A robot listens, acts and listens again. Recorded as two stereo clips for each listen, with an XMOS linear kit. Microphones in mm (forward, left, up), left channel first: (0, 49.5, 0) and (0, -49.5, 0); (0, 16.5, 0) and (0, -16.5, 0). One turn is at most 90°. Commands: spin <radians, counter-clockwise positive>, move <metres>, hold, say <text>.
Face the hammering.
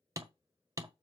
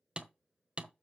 spin -0.61
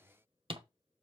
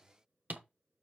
spin -1.57
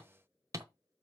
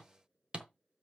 spin -0.61
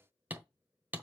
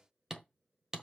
spin -0.35
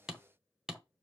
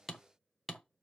say Found it: hammering, straight ahead.